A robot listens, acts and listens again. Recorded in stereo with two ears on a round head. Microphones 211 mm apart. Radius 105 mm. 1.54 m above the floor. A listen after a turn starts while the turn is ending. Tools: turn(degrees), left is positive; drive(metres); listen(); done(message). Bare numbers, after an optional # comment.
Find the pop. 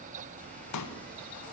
turn(90)
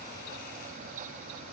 done("Facing where the pop came from. I can't hear it now.")